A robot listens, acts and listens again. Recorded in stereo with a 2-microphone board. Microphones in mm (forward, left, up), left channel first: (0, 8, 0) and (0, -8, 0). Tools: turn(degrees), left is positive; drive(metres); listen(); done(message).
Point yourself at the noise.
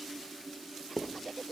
turn(degrees=30)
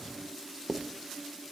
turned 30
turn(degrees=-25)
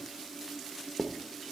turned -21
done("Found it: writing, straight ahead, under 1 m away.")